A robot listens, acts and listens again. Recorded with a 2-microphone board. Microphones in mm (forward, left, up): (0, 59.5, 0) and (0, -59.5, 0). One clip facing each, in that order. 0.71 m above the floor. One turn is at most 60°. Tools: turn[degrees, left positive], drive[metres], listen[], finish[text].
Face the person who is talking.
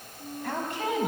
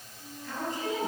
Thought: The woman speaking: about 70° left or 110° left.
Action: turn[60]
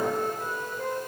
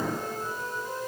Action: listen[]
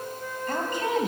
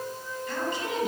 Thought: So it is at 50° left.
Action: turn[50]
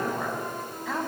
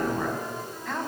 Action: finish[Found it: a woman speaking, straight ahead, over 4 m away.]